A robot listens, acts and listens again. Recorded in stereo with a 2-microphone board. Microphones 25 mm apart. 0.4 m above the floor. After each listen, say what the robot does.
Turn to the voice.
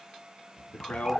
Turn 90° left.
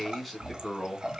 Facing the man speaking.